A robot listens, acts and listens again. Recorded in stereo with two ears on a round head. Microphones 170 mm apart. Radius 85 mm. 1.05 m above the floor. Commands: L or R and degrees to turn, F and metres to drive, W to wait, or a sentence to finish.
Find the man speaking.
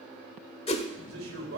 R90
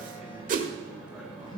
W
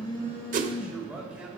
W
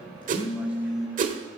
I heard a man speaking from this way, but can't make it out now.